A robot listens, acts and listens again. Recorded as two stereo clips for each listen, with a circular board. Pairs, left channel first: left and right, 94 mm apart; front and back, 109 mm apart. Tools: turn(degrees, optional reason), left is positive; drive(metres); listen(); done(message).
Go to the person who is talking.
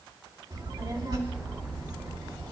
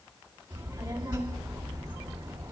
turn(degrees=-115, reason="The child speaking: 115° right.")
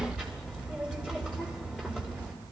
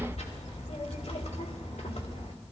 turn(degrees=10, reason="The child speaking is now 10° left.")
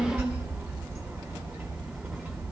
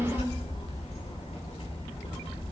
drive(metres=1.0)
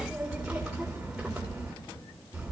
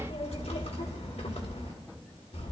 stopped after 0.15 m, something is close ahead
done("Something is in my way. I am facing the child speaking but have not reached it.")